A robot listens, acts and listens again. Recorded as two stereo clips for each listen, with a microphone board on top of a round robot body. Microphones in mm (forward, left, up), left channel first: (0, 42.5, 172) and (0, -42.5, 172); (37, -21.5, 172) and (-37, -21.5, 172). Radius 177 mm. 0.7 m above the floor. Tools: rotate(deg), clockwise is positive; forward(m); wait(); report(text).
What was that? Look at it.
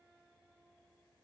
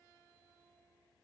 wait()
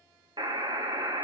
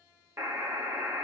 rotate(125)
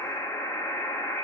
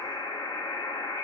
rotate(-30)
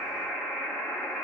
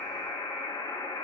rotate(-10)
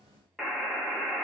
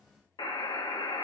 report("Facing the buzzer, 1 to 2 m away.")